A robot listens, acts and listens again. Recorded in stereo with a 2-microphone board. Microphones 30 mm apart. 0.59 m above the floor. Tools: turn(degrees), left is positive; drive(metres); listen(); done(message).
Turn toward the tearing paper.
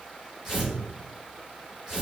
turn(degrees=-30)
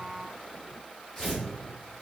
turn(degrees=15)
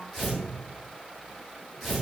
done("Found it: tearing paper, straight ahead.")